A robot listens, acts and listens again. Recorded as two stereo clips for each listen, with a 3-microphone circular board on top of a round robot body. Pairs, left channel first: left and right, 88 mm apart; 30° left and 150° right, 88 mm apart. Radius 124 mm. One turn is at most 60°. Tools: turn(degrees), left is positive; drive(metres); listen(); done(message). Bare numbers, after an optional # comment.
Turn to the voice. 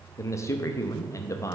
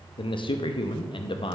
# The man speaking: 40° left.
turn(40)
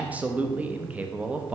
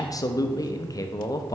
# The man speaking is now 15° right.
turn(-15)
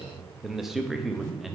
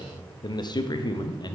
done("Found it: a man speaking, straight ahead.")